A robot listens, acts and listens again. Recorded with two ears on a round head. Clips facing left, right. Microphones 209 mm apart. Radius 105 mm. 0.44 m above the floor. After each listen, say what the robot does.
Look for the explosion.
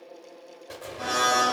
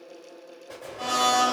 Turn 15° left.
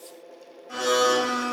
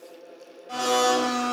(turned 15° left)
Keep listening.
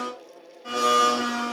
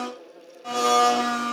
I heard an explosion, but can't make it out now. It was about straight ahead or 150° left.